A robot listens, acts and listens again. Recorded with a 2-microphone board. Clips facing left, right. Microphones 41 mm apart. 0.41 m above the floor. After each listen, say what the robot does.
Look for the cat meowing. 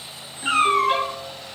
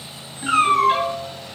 Turn 50° left.
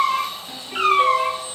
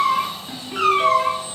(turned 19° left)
Turn 40° left.
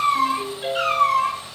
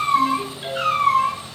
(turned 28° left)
Turn 50° left.
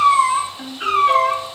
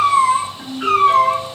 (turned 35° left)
Turn 110° left.
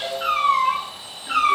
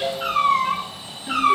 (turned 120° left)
Turn 10° right.
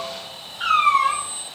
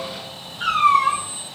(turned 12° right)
Facing the cat meowing, 2 to 4 m away.